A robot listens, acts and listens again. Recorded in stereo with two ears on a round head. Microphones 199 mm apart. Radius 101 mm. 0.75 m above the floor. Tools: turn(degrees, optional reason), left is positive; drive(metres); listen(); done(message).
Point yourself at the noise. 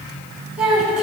turn(degrees=-30)
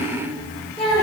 turn(degrees=25, reason="So it is at 25° left.")
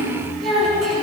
done("Facing the child speaking, over 4 m away.")